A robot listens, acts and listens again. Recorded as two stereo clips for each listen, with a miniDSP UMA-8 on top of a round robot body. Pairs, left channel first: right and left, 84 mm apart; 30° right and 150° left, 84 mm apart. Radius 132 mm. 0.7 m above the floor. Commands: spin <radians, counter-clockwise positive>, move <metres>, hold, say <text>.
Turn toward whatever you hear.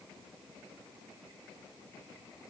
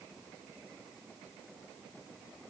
hold
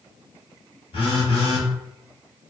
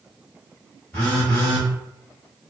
spin -1.83
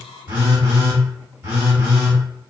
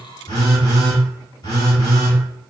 spin 0.35
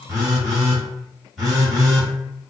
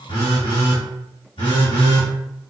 say Facing the phone buzzing, 1 to 2 m away.